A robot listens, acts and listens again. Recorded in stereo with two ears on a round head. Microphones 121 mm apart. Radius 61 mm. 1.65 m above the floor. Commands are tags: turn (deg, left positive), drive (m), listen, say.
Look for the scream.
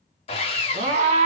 <turn deg="-50"/>
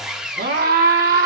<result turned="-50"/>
<turn deg="-75"/>
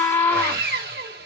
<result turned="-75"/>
<turn deg="15"/>
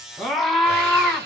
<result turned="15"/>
<say>Found it: a scream, straight ahead.</say>